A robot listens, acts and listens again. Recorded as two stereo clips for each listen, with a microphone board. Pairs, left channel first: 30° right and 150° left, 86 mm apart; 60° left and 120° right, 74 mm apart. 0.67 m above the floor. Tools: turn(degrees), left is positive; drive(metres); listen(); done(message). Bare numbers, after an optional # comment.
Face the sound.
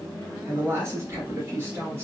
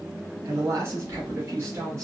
# The woman speaking: 155° right.
turn(-155)
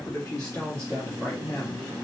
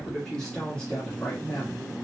done("Facing the woman speaking, 1 to 2 m away.")